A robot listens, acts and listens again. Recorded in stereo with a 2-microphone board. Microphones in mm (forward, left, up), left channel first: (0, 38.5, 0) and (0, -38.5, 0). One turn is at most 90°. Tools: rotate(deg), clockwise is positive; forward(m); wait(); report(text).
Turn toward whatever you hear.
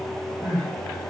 rotate(75)
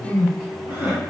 rotate(30)
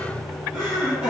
rotate(15)
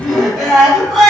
report("Found it: crying, straight ahead, 1 to 2 m away.")